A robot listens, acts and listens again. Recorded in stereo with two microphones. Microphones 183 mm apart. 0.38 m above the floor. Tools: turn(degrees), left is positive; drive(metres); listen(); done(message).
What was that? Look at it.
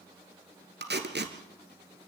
turn(degrees=-70)
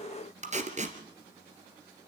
turn(degrees=-40)
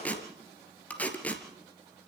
turn(degrees=10)
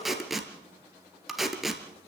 done("Facing the tape being pulled.")